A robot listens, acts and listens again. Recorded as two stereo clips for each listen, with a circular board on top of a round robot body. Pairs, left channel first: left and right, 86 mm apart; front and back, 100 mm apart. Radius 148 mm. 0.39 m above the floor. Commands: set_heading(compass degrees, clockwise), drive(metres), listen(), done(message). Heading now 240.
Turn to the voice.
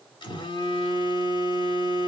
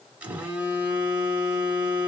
listen()
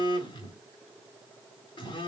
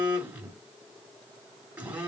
listen()
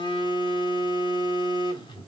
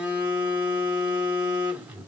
done("I can't make out anyone speaking to turn to.")